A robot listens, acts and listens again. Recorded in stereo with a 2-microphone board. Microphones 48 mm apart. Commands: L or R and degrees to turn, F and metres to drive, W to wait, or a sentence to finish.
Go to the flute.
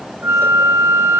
R65
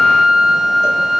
F1.0
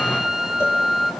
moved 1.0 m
R10
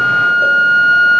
F1.0
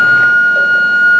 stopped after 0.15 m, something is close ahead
I am next to the flute.